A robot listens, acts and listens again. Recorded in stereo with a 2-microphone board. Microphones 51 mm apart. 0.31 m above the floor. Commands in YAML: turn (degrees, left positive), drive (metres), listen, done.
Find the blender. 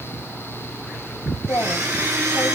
turn: -90
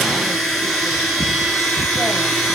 done: "Found it: a blender, straight ahead, 1 to 2 m away."